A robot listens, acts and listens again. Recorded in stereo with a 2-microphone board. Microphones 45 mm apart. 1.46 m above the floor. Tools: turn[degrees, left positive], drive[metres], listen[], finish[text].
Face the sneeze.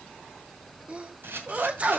Thought: The sneeze: about 30° right or 150° right.
Action: turn[-30]
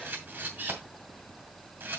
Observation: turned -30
Action: listen[]
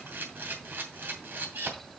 Action: finish[I heard a sneeze, but can't make it out now. It was about straight ahead or 120° right.]